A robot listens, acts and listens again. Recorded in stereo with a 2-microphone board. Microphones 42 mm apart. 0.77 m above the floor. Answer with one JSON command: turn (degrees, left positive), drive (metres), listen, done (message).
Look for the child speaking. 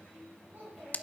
{"turn": -55}
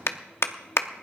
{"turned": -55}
{"listen": true}
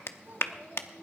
{"turn": -75}
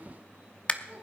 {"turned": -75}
{"turn": -30}
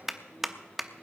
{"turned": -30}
{"listen": true}
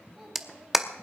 {"done": "Facing the child speaking."}